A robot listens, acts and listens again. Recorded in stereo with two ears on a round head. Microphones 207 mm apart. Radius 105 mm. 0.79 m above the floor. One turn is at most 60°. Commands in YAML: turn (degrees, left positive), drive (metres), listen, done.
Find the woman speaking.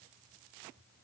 listen: true
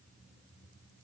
listen: true
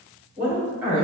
turn: -30
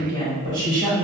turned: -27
turn: -60
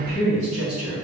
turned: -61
turn: -60
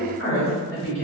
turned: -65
done: "Facing the woman speaking, 2 to 4 m away."